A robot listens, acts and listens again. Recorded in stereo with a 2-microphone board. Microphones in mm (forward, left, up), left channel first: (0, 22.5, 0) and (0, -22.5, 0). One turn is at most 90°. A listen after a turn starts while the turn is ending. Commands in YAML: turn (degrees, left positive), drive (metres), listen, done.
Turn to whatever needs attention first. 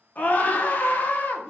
turn: 40
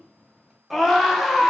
done: "Found it: a scream, straight ahead, under 1 m away."